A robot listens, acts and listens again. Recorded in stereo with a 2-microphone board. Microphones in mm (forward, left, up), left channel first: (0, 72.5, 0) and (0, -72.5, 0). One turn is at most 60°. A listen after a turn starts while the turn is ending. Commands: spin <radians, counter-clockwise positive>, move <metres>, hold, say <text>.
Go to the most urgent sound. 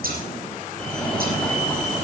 spin 0.52
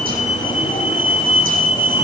spin 1.05
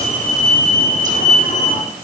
spin 1.05
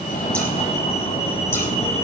spin 0.96
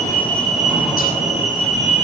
move 1.0
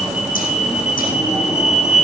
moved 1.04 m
move 1.0
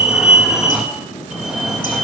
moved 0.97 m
move 1.0
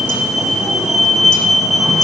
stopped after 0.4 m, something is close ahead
say I am next to the fire alarm.